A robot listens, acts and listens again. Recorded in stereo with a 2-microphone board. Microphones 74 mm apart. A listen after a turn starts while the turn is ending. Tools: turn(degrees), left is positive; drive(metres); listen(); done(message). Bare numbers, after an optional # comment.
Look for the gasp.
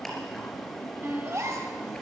# The gasp: about 45° right or 135° right.
turn(-45)
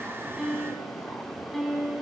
listen()
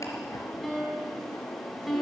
done("I heard a gasp, but can't make it out now. It was about straight ahead or 90° right.")